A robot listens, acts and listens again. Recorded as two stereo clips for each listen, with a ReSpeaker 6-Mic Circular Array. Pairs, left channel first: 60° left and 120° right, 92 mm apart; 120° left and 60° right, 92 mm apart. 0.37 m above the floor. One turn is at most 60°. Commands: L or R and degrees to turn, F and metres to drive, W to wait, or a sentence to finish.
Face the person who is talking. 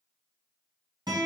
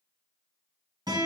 W
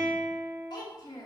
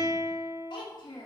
L60
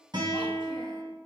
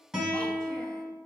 L35
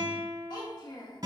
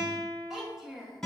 L25
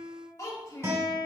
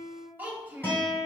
L10
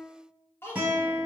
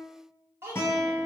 Found it: a child speaking, straight ahead.